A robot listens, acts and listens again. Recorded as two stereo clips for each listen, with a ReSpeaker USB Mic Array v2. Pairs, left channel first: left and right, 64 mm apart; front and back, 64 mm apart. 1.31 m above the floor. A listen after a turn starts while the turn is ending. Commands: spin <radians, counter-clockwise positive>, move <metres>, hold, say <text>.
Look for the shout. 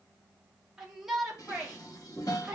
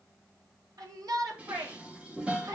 spin -2.97
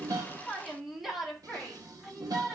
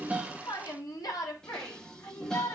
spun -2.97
say Found it: a shout, straight ahead, 2 to 4 m away.